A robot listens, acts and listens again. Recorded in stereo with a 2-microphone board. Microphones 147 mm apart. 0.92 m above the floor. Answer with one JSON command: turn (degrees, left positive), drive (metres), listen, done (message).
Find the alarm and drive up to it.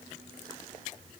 {"listen": true}
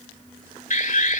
{"turn": 65}
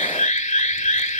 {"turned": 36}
{"turn": 65}
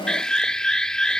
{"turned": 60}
{"drive": 1.0}
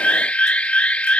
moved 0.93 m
{"turn": 10}
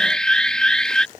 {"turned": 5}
{"drive": 1.0}
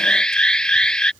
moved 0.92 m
{"turn": 10}
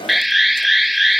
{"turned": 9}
{"drive": 1.0}
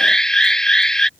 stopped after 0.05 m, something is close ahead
{"done": "Arrived at the alarm, straight ahead."}